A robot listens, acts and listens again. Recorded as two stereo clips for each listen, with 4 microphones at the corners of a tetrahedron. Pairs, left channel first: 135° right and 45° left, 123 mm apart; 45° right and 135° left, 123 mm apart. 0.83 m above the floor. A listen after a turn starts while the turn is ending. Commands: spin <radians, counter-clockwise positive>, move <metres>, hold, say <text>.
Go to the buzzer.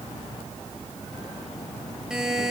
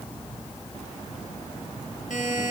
spin -0.70
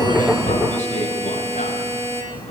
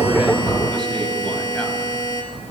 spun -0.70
spin 0.26
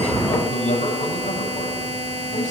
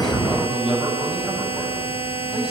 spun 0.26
move 1.0
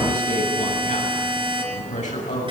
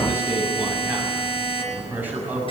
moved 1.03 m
move 1.0
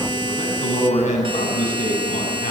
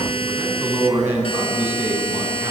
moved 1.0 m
move 1.0
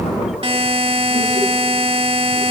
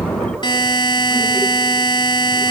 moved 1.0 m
move 1.0
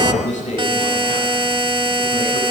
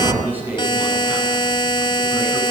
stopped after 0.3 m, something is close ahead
say I am next to the buzzer.